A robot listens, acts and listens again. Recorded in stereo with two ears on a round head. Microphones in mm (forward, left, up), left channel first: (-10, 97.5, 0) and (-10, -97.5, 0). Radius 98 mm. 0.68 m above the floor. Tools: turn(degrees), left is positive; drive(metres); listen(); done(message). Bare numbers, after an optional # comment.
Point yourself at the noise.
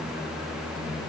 listen()
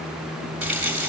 turn(-30)
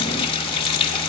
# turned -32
# So it is at 25° left.
turn(25)
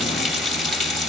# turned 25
done("Facing the running tap.")